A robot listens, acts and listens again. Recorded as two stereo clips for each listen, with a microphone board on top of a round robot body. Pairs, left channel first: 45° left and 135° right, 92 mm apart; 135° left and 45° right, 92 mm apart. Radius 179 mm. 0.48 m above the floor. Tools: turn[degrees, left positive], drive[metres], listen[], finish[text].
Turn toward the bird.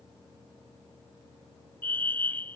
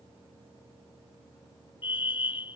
Action: listen[]
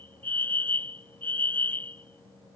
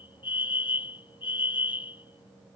Action: listen[]
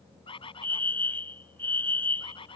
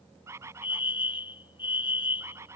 Thought: The bird: 15° left.
Action: turn[15]
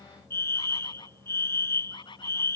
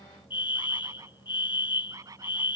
Thought: The bird is now 10° left.
Action: turn[10]
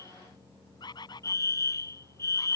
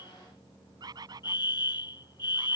Action: finish[Found it: a bird, straight ahead.]